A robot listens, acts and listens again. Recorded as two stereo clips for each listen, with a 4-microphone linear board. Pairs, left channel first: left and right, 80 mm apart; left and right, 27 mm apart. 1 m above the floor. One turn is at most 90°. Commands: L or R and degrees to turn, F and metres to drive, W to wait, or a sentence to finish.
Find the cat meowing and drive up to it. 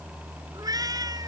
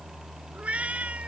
R50
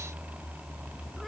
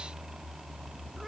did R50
W
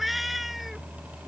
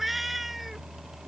F1.0
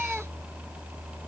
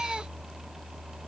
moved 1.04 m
W
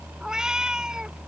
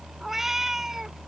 R10
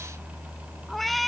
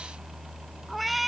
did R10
F1.0
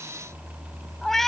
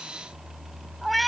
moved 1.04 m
F1.0
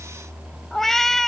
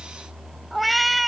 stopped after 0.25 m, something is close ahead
I am next to the cat meowing.